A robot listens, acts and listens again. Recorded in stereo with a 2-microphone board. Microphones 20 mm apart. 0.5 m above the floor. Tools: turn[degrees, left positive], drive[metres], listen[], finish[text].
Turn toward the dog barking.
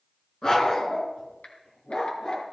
Thought: The dog barking: about 35° left or 145° left.
Action: turn[35]
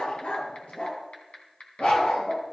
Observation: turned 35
Thought: So it is at 100° left.
Action: turn[100]
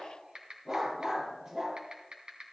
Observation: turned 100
Thought: The dog barking is now 20° right.
Action: turn[-20]
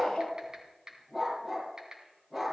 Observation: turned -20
Action: finish[Facing the dog barking.]